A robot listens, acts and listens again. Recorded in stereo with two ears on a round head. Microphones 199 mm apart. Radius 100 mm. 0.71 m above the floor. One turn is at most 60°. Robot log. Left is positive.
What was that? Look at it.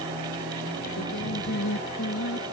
cmd yaw +60
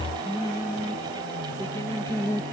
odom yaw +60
note: So it is at 15° left.
cmd yaw +15
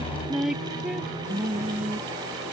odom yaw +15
end: Found it: singing, straight ahead.